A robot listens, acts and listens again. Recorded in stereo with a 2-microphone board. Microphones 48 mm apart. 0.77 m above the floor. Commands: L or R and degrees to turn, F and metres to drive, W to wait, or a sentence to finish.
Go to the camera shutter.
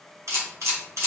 R90
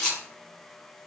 L10
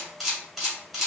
F1.0
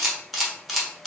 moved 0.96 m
F1.0
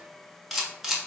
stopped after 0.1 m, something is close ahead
Arrived at the camera shutter, straight ahead.